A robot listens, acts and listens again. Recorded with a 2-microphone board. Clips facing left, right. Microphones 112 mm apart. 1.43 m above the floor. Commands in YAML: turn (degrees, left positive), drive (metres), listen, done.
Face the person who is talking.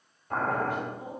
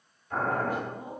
turn: -40
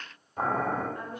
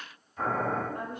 turn: -100
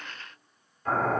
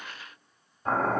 listen: true
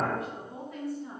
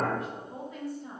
done: "Found it: a woman speaking, straight ahead, 1 to 2 m away."